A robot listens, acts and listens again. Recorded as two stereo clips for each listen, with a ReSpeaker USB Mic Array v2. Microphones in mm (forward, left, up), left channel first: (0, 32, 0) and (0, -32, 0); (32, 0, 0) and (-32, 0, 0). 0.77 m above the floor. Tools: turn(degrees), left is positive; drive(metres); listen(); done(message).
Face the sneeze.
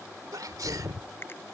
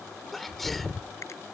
turn(degrees=-90)
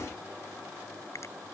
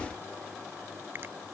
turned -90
done("Facing where the sneeze came from. I can't hear it now.")